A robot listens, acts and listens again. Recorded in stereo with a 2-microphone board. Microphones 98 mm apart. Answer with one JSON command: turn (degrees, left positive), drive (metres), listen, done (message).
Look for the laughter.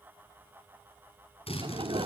{"turn": -60}
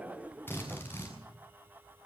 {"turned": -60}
{"turn": -15}
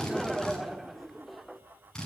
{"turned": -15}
{"done": "Facing the laughter."}